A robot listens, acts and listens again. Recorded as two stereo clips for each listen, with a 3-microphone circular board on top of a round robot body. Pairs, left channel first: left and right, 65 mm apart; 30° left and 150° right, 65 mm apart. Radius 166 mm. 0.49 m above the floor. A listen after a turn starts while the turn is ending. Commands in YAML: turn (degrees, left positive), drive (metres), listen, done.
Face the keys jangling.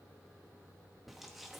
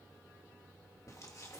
listen: true
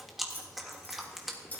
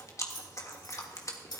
turn: 25
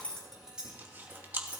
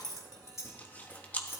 turn: -25
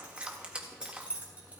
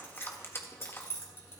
turn: -20
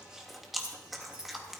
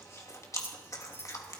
turn: -15
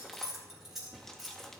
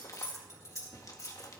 done: "Found it: keys jangling, straight ahead."